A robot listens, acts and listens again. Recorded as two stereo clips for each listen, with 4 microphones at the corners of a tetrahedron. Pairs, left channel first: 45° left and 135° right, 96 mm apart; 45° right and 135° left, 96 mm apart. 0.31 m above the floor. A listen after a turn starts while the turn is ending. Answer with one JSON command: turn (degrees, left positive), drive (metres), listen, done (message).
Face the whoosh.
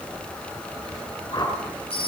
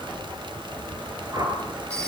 {"turn": 85}
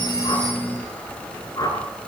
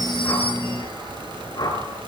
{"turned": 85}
{"done": "Facing the whoosh, over 4 m away."}